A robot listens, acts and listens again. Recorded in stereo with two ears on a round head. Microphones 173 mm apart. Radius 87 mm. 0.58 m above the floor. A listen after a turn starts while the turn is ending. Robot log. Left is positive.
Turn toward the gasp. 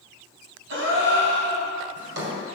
note: The gasp: about 65° right or 115° right.
cmd yaw -65
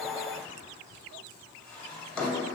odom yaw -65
cmd idle
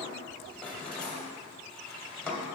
end: I heard a gasp, but can't make it out now. It was about straight ahead or 50° right.